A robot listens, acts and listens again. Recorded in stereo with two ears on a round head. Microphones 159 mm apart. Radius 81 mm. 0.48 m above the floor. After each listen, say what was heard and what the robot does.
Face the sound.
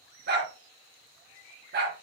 The dog barking: about 60° right or 120° right. Turn 60° right.
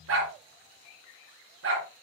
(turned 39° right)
So it is at 80° right. Turn 80° right.
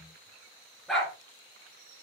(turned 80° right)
Facing the dog barking.